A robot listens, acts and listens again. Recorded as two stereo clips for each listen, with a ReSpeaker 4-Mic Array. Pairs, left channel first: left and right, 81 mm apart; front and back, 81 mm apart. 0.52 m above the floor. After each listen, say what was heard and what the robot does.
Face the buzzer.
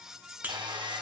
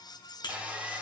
The buzzer: 20° right. Turn 20° right.
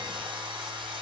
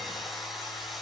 Keep listening.
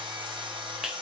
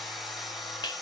Found it: a buzzer, straight ahead.